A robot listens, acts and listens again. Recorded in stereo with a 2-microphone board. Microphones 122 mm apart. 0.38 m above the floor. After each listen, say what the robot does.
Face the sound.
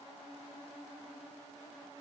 Keep listening.
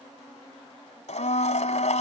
Turn 70° left.
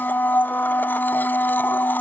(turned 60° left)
Turn 15° left.
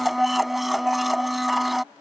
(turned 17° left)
Facing the blender.